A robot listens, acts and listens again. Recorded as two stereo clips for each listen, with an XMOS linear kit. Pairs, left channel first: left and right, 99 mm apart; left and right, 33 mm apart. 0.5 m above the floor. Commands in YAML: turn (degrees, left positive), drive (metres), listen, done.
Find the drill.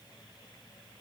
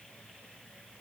listen: true
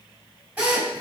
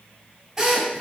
turn: -30
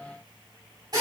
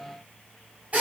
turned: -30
turn: -135
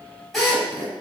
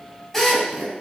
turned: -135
done: "Facing the drill, 2 to 4 m away."